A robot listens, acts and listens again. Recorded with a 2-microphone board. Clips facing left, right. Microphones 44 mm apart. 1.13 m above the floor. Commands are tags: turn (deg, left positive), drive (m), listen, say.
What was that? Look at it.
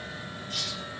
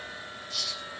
<turn deg="50"/>
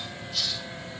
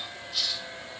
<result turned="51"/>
<say>Found it: a hiss, straight ahead.</say>